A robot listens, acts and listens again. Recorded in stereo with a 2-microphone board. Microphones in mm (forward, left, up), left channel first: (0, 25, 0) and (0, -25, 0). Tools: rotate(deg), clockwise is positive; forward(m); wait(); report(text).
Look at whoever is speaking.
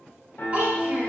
rotate(30)
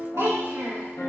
rotate(120)
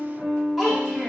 report("Found it: a child speaking, straight ahead, 1 to 2 m away.")